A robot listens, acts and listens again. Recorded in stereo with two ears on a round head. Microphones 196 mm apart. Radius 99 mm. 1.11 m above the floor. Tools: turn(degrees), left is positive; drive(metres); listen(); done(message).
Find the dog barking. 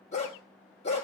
turn(degrees=30)
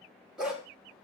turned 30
done("Found it: a dog barking, straight ahead, 2 to 4 m away.")